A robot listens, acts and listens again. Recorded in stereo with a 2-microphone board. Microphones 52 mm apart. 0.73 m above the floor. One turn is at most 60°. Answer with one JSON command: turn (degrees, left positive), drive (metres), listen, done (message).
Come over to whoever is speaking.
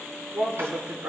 {"turn": -55}
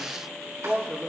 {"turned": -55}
{"drive": 1.0}
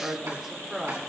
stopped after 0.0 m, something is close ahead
{"turn": -10}
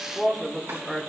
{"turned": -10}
{"done": "Something is in my way. I am facing the woman speaking but have not reached it."}